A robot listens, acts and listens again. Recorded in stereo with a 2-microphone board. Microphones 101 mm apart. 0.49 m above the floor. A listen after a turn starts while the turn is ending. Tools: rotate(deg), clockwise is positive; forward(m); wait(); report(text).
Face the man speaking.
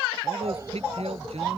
rotate(90)
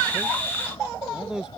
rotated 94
rotate(10)
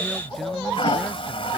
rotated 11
wait()
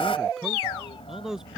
report("Facing the man speaking.")